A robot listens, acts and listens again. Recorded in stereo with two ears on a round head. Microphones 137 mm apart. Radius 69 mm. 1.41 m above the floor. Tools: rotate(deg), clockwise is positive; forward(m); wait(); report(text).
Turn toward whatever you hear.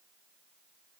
wait()
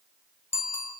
rotate(-15)
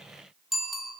report("Facing the bicycle bell, over 4 m away.")